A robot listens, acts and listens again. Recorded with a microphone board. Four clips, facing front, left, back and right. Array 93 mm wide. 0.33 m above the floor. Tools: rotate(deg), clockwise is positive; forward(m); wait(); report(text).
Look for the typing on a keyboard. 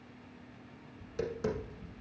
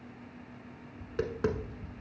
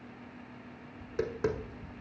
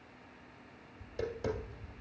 wait()
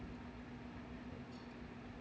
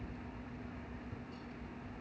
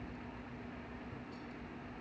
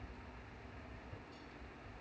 wait()
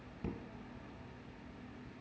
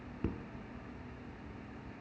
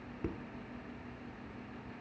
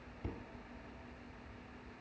report("I can't make out typing on a keyboard, only tapping.")